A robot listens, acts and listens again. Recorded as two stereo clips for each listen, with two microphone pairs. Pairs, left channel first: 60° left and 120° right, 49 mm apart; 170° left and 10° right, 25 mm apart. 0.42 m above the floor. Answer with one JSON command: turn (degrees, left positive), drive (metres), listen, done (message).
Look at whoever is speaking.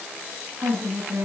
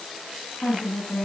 {"turn": -150}
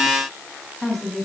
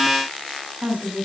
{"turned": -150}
{"turn": -30}
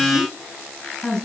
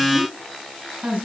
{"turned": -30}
{"turn": -20}
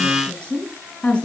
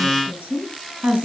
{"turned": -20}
{"turn": -10}
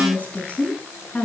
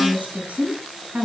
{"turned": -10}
{"done": "Facing the woman speaking, over 4 m away."}